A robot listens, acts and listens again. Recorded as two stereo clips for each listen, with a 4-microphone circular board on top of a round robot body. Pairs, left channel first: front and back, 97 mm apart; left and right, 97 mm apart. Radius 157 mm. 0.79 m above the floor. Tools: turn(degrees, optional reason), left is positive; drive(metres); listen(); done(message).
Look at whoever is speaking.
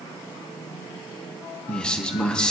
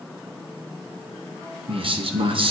turn(degrees=-80, reason="The man speaking: 80° right.")
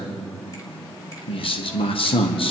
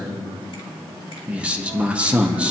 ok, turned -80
turn(degrees=-15, reason="The man speaking is now 15° right.")
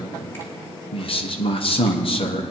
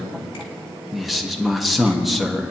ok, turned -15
done("Found it: a man speaking, straight ahead.")